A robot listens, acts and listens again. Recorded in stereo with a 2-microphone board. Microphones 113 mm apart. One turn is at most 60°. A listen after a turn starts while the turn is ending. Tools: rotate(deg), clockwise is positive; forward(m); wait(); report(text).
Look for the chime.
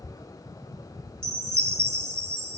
rotate(25)
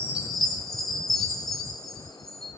report("Found it: a chime, straight ahead, 2 to 4 m away.")